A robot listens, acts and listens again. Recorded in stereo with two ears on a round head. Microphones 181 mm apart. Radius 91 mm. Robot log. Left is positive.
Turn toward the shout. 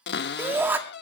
cmd yaw -30
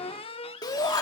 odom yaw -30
note: So it is at 20° left.
cmd yaw +20
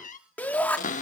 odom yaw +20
note: The shout is now 10° left.
cmd yaw +10
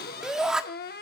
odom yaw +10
end: Facing the shout.